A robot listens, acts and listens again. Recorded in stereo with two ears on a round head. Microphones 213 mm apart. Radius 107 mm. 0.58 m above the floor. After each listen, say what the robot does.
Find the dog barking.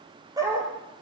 Turn 15° right.
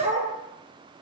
Turn 30° right.
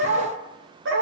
Turn 125° right.
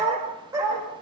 Turn 15° right.
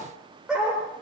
Found it: a dog barking, straight ahead, over 4 m away.